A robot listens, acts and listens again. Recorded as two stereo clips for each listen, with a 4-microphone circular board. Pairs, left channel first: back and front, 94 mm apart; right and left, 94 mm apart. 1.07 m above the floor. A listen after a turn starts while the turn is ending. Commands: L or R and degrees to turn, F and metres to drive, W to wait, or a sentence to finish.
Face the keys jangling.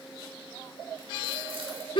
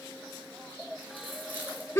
W
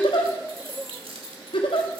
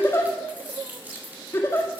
L20
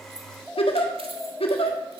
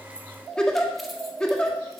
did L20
W
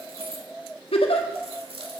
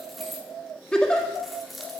Found it: keys jangling, straight ahead, 1 to 2 m away.